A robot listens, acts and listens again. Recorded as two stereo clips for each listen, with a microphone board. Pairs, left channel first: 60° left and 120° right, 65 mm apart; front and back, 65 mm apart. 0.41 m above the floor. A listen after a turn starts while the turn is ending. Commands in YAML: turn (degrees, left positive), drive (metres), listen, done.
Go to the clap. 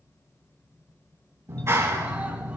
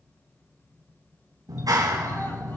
turn: -165
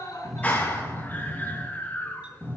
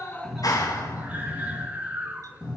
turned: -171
drive: 1.0
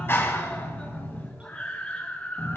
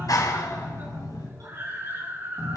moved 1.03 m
turn: 10
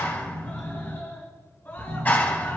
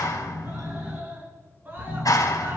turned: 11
drive: 1.0
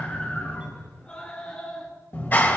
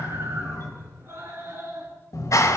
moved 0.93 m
drive: 1.0
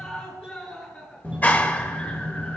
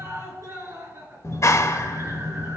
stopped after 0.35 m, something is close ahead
done: "I am next to the clap."